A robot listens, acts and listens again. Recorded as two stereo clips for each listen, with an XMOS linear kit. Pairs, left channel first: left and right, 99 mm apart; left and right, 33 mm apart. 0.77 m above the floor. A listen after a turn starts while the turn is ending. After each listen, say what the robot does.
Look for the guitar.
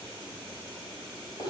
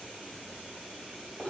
Keep listening.
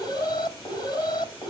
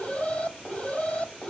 Keep listening.
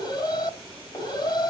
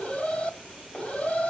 I can't make out a guitar, only an alarm.